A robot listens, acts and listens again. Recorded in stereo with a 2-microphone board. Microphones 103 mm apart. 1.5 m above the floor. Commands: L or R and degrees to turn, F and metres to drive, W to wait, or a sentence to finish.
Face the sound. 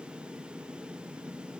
W
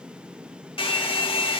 L60
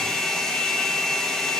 Found it: a hair dryer, straight ahead.